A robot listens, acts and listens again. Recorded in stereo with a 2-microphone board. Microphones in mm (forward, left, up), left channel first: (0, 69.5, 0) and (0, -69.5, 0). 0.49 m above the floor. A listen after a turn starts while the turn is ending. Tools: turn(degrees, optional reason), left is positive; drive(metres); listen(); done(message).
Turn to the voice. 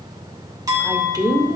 turn(degrees=-25, reason="The woman speaking: about 25° right or 155° right.")
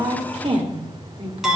turn(degrees=-125, reason="So it is at 125° right.")
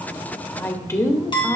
turn(degrees=20, reason="The woman speaking is now 20° left.")
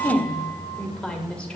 turn(degrees=10, reason="The woman speaking is now 10° left.")
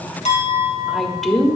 done("Facing the woman speaking.")